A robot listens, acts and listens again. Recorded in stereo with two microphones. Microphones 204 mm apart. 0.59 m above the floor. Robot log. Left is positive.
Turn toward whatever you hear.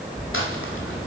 cmd yaw +90
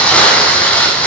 end: Found it: crumpling, straight ahead.